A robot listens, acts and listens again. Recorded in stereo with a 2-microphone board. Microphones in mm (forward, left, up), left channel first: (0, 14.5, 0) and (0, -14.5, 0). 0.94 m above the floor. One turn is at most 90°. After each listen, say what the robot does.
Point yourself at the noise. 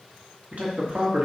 Turn 55° right.
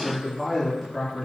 Turn 15° left.
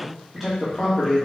Turn 10° left.
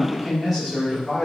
Facing the man speaking, 2 to 4 m away.